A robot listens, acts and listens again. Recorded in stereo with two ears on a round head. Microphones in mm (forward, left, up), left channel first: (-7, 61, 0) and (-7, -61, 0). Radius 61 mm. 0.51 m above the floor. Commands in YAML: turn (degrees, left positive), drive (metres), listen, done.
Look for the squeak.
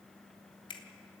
listen: true
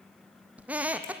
turn: -30
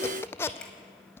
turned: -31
turn: 20
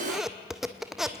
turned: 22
done: "Facing the squeak."